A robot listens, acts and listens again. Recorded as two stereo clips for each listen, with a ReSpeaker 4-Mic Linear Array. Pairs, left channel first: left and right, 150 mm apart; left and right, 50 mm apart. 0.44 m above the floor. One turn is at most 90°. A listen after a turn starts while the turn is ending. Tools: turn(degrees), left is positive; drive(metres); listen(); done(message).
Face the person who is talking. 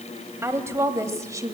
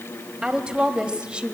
turn(degrees=-20)
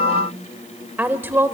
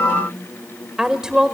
turn(degrees=-15)
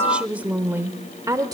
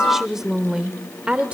turn(degrees=-25)
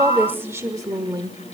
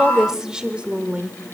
turn(degrees=-30)
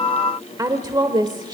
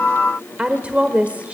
turn(degrees=-25)
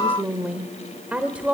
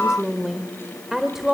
turn(degrees=-30)
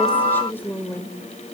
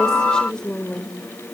turn(degrees=15)
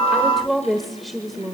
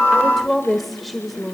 done("Facing the woman speaking, 1 to 2 m away.")